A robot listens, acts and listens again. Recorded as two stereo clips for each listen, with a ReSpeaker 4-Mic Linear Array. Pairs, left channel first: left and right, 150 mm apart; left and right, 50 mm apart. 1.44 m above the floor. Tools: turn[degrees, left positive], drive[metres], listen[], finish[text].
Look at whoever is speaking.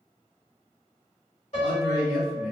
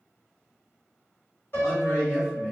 Action: turn[90]
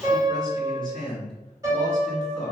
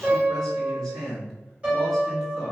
Action: finish[Found it: a man speaking, straight ahead.]